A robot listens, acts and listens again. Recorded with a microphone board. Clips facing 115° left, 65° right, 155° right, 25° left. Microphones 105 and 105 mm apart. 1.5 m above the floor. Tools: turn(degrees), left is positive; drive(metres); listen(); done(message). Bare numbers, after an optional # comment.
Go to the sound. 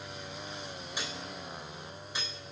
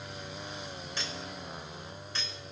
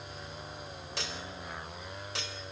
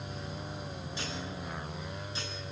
# The cutlery clinking: 170° right.
turn(-170)
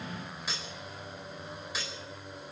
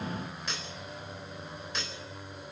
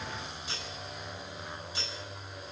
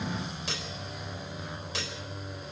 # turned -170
# The cutlery clinking is now 30° left.
turn(30)
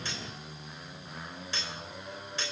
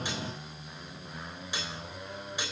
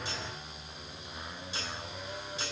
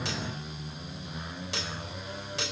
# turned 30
# The cutlery clinking is now 10° left.
turn(10)
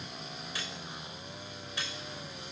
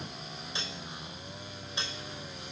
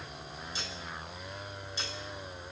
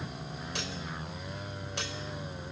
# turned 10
drive(1.0)
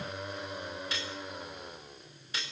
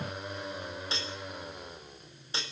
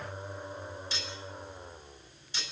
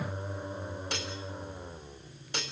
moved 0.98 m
drive(1.0)
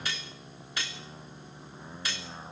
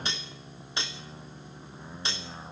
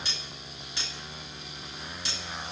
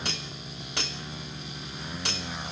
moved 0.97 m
drive(1.0)
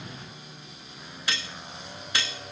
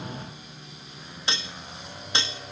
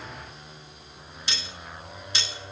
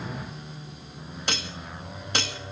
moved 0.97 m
drive(1.0)
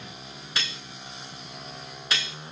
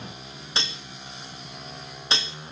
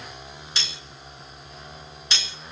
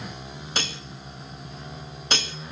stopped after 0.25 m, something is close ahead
# The cutlery clinking is now 10° right.
turn(-10)
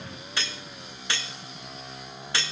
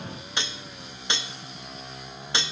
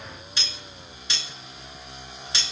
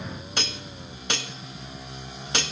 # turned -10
done("I am next to the cutlery clinking.")